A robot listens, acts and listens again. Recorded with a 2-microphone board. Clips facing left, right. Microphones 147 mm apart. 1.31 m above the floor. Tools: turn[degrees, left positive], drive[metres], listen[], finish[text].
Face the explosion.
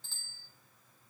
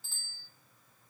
Action: listen[]
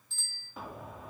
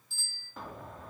Action: turn[30]
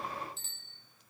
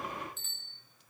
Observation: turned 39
Action: listen[]
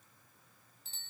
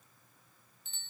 Action: finish[I heard an explosion, but can't make it out now. It was about 35° right or 135° left.]